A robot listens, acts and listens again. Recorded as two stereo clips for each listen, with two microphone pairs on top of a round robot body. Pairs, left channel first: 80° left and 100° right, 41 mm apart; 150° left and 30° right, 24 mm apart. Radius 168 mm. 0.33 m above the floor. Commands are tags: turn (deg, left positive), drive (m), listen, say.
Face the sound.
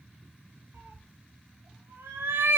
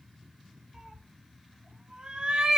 <turn deg="-90"/>
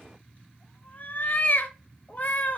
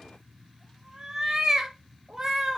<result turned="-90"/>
<turn deg="35"/>
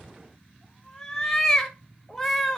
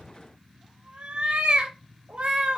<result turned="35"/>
<say>Facing the cat meowing, under 1 m away.</say>